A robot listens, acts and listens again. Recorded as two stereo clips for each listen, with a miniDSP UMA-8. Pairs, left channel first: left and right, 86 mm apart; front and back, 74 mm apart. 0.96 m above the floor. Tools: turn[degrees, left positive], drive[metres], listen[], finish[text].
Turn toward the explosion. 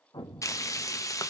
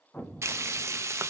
Thought: The explosion: 65° left.
Action: turn[65]
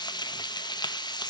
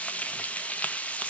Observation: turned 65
Action: finish[I heard an explosion from this way, but can't make it out now.]